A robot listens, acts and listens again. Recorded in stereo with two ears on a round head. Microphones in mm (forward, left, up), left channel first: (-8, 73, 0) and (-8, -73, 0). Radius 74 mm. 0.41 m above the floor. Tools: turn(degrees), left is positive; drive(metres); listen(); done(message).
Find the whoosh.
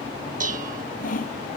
listen()
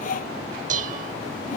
listen()
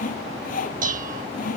done("I can't make out a whoosh to turn to.")